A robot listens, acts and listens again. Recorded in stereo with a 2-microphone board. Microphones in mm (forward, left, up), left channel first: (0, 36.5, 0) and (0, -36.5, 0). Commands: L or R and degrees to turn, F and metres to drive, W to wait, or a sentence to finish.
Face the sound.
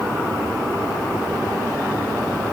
W
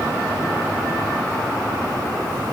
W
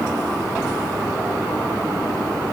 I can't make out anything to turn to.